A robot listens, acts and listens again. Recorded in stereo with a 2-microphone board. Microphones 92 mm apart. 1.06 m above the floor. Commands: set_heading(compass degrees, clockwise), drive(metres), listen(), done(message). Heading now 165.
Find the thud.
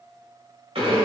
listen()
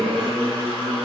listen()
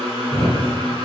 set_heading(135)
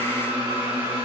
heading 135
listen()
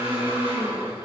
done("I heard a thud, but can't make it out now. It was about 15° right or 135° left.")